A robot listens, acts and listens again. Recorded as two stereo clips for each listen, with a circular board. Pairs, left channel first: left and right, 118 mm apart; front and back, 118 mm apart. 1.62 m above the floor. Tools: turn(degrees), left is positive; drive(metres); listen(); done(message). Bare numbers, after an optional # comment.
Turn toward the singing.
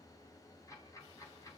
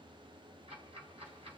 listen()
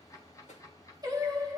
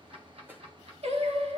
# The singing: 150° right.
turn(-150)
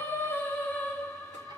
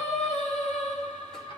# The singing is now 20° left.
turn(20)
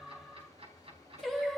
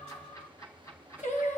done("Found it: singing, straight ahead, 1 to 2 m away.")